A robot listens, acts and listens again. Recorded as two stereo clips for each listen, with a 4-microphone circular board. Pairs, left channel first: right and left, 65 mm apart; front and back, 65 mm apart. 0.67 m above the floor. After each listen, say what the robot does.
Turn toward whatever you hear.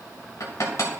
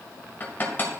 Turn 60° right.
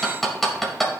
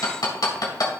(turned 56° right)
Facing the hammering, 2 to 4 m away.